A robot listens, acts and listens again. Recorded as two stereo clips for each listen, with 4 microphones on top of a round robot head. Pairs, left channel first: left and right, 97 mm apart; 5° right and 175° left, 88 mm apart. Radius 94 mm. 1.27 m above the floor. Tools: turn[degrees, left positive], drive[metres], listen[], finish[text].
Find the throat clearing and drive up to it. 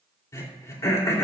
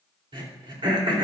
Thought: The throat clearing: 150° left.
Action: turn[150]
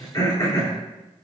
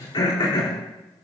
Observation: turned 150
Thought: The throat clearing is now 30° left.
Action: turn[30]
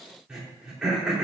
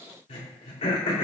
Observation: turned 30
Action: drive[1.0]
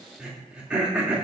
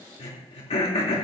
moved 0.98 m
Thought: The throat clearing is now 10° right.
Action: turn[-10]
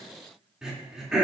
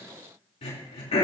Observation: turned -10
Action: drive[1.0]
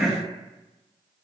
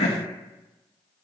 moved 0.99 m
Action: drive[1.0]
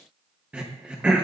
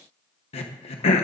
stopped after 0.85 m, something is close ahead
Thought: The throat clearing is now 10° right.
Action: turn[-10]
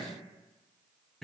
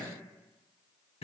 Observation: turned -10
Action: listen[]
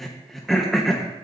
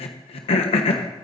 Action: finish[I am next to the throat clearing.]